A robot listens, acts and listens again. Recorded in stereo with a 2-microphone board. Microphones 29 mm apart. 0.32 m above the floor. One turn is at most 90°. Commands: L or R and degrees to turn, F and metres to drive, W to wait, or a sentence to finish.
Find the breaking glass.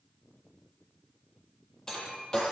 L25
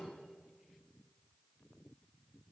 W
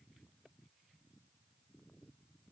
I heard breaking glass, but can't make it out now. It was about straight ahead or 130° left.